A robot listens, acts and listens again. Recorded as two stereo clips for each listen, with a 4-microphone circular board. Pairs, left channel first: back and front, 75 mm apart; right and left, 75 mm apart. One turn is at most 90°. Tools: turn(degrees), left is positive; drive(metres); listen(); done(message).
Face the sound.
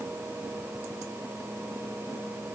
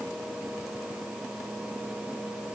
listen()
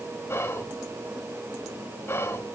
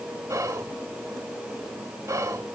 turn(degrees=90)
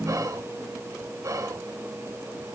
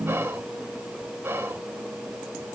turn(degrees=35)
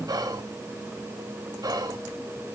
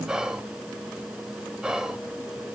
turn(degrees=10)
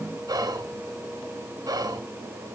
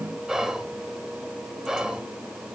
done("Facing the whispering, 1 to 2 m away.")